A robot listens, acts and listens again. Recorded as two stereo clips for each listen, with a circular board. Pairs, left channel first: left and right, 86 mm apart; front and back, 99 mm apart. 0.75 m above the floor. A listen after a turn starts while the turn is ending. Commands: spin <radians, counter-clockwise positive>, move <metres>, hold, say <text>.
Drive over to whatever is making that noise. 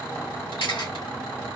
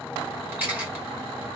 spin 1.92
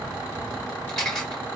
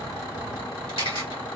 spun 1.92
spin 0.17
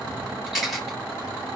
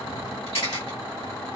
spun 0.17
move 1.0
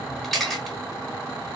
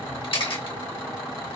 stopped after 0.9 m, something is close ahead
say I am next to the camera shutter.